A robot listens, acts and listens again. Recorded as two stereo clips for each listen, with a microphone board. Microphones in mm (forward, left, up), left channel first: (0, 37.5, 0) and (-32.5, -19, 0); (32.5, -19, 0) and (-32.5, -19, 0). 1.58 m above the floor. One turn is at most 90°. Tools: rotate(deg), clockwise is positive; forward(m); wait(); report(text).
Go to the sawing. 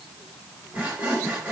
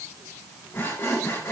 rotate(55)
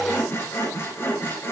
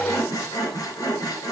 rotate(-10)
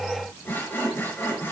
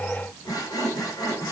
forward(1.0)
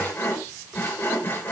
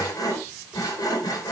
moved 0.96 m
forward(1.0)
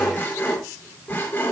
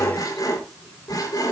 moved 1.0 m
forward(1.0)
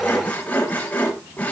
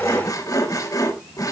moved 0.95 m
forward(1.0)
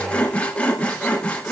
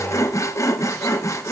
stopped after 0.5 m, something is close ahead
report("Arrived at the sawing, straight ahead.")